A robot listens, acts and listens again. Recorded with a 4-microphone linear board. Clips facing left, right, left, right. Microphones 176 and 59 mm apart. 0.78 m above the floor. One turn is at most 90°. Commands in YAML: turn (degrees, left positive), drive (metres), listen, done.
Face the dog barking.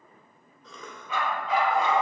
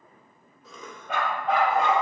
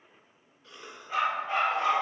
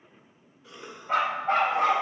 turn: -65
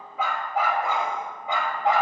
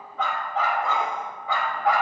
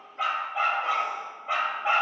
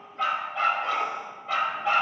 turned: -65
turn: 25
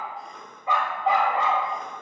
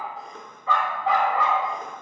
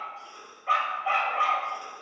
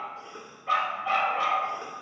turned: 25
turn: 30
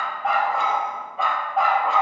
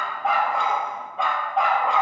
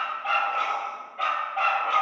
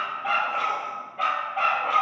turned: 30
done: "Found it: a dog barking, straight ahead, 1 to 2 m away."